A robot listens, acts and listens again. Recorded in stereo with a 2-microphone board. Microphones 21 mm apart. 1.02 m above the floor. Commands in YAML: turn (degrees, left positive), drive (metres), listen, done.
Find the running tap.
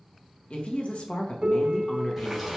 turn: -30
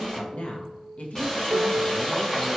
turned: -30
turn: 20
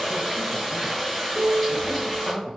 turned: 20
done: "Facing the running tap."